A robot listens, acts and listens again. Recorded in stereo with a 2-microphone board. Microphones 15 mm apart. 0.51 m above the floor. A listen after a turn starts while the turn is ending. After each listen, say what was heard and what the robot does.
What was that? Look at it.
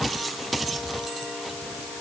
Keep listening.
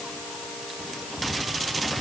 Keep listening.
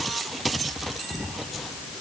I can't make out anything to turn to.